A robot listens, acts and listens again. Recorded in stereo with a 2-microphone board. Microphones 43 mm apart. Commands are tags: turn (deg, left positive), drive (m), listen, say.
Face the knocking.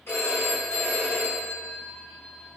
<listen/>
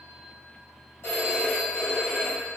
<listen/>
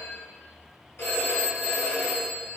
<say>I can't make out knocking, only a phone ringing.</say>